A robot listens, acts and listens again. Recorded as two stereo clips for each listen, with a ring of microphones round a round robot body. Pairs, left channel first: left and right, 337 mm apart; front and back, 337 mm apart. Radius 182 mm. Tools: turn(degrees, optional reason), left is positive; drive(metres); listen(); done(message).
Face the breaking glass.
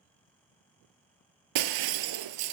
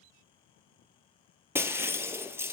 turn(degrees=-95, reason="The breaking glass: 95° right.")
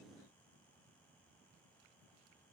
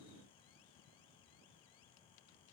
done("Facing where the breaking glass came from. I can't hear it now.")